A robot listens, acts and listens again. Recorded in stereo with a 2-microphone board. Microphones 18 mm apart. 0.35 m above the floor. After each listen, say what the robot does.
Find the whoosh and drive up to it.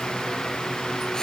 Keep listening.
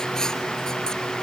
Keep listening.
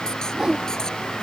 Turn 45° right.
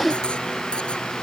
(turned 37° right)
Turn 10° right.
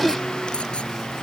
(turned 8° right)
Keep listening.
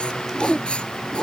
Drive 1.0 m forward.
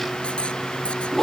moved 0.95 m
Drive 1.0 m forward.
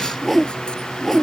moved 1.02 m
Drive 1.0 m forward.
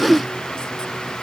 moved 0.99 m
Drive 1.0 m forward.
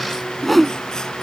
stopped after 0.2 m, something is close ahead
I am next to the whoosh.